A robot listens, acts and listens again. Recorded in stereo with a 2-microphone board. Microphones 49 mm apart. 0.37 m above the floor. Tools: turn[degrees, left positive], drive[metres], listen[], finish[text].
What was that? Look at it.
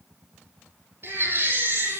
Thought: The baby crying: about 55° right or 125° right.
Action: turn[-55]
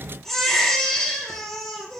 Action: finish[Facing the baby crying, over 4 m away.]